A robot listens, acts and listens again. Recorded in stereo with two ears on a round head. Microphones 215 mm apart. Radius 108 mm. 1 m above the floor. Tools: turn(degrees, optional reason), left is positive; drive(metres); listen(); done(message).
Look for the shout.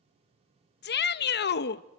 turn(degrees=45, reason="The shout: about 45° left or 135° left.")
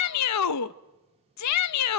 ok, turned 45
turn(degrees=90, reason="So it is at 90° left.")
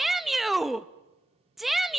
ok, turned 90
done("Facing the shout.")